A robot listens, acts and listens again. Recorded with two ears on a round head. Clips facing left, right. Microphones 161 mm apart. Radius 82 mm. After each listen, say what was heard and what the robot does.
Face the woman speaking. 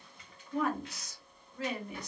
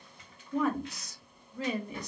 Turn 90° right.
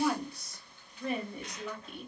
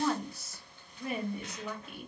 Facing the woman speaking, 1 to 2 m away.